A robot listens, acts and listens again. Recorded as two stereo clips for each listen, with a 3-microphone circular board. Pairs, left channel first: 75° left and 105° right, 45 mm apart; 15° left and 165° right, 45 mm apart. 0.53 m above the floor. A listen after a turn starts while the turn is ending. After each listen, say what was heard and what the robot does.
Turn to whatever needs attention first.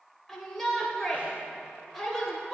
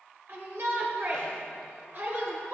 The shout: 165° left. Turn 165° left.
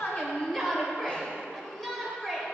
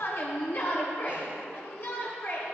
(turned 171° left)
The shout is now 10° right. Turn 10° right.
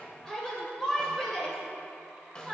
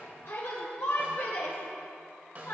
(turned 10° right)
Facing the shout.